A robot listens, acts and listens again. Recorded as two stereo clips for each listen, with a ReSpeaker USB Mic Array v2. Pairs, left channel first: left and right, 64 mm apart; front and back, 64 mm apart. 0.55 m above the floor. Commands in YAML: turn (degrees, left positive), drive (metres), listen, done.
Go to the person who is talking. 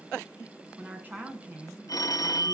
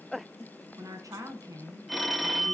turn: -150
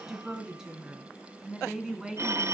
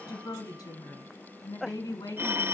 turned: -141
turn: -10
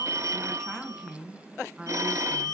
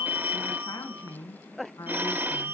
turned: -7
drive: 1.0
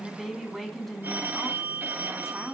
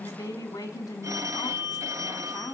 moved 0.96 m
drive: 1.0
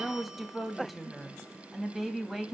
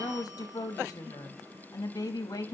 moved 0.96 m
drive: 1.0
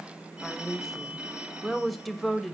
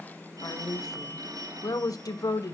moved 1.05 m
drive: 1.0
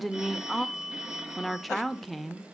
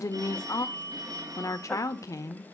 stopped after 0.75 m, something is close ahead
done: "I am next to the woman speaking."